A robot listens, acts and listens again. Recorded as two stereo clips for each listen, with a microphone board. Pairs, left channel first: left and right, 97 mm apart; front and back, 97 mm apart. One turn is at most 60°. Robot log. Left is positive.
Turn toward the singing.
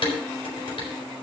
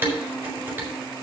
cmd idle
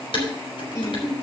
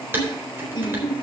note: The singing: 40° left.
cmd yaw +40
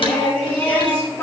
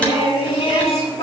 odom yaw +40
note: The singing is now 20° left.
cmd yaw +20
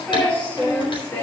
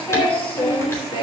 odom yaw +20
note: The singing is now 20° left.
cmd yaw +20
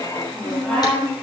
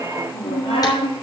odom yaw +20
note: The singing is now 15° left.
cmd yaw +15
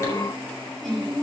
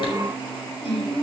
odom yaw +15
end: Facing the singing, over 4 m away.